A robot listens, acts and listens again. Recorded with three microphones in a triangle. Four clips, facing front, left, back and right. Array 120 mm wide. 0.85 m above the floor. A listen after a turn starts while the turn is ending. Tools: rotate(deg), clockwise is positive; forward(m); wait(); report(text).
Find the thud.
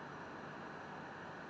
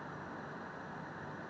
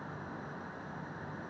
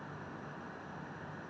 wait()
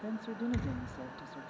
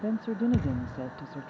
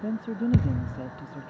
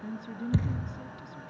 rotate(170)
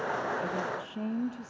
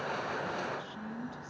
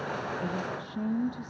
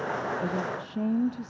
report("Facing where the thud came from. I can't hear it now.")